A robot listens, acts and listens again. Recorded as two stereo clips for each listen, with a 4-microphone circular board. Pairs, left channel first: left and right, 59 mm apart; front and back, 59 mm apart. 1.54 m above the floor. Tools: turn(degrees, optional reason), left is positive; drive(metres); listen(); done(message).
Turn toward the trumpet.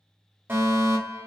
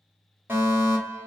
listen()
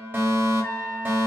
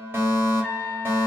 turn(degrees=70, reason="The trumpet: 70° left.")
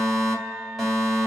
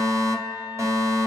turn(degrees=25, reason="The trumpet is now 25° left.")
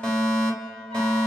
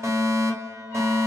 listen()
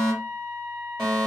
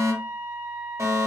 turn(degrees=15, reason="The trumpet is now 15° left.")
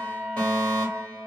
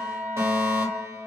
done("Found it: a trumpet, straight ahead.")